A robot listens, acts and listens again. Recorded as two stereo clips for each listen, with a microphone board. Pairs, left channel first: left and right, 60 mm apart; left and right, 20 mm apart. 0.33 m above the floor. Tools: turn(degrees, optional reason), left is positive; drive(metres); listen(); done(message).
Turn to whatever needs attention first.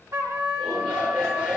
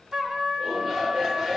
turn(degrees=-15, reason="The shout: about 15° right or 165° right.")
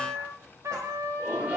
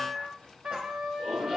turn(degrees=-150, reason="So it is at 150° right.")
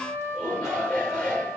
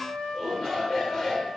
turn(degrees=20, reason="The shout is now 20° left.")
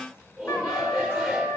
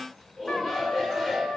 done("Facing the shout.")